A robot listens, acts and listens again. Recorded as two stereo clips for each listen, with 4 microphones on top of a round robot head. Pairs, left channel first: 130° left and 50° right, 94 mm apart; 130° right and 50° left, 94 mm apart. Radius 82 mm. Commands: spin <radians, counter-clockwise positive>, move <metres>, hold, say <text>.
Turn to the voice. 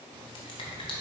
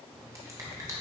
hold
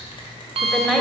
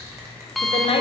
spin -2.44
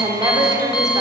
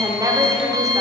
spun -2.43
say Facing the woman speaking.